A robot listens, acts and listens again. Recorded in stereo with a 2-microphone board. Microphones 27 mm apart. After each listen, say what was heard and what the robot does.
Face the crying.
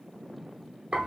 Keep listening.
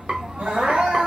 Turn 90° right.
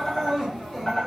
Facing the crying, 1 to 2 m away.